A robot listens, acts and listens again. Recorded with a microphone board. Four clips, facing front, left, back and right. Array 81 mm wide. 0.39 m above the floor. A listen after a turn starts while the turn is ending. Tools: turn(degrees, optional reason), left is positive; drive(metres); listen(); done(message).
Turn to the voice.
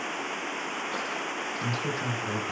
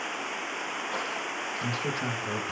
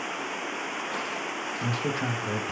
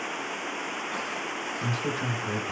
turn(degrees=150, reason="The man speaking: 150° left.")
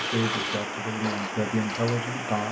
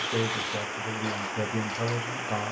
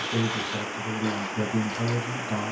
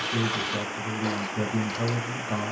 done("Found it: a man speaking, straight ahead, 1 to 2 m away.")